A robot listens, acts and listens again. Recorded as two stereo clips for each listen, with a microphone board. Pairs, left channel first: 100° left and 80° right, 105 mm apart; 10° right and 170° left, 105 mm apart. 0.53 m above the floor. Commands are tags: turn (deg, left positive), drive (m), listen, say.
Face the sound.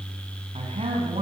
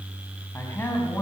<turn deg="-80"/>
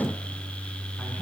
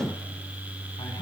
<listen/>
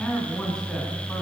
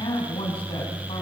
<turn deg="20"/>
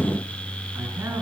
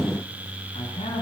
<turn deg="-15"/>
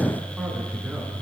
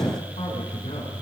<listen/>
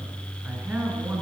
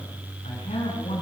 <say>Facing the man speaking, over 4 m away.</say>